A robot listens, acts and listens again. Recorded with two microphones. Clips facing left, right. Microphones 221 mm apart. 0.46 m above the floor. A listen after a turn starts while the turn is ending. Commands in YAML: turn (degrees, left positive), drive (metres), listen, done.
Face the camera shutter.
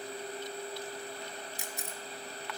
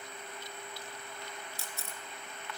turn: 15
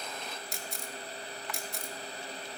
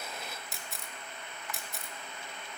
done: "Facing the camera shutter, 1 to 2 m away."